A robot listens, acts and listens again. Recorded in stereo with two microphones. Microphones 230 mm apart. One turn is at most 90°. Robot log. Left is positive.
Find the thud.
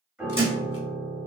note: The thud: about 25° left or 155° left.
cmd yaw +25
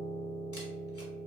cmd idle
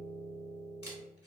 end: I heard a thud, but can't make it out now. It was about straight ahead or 130° left.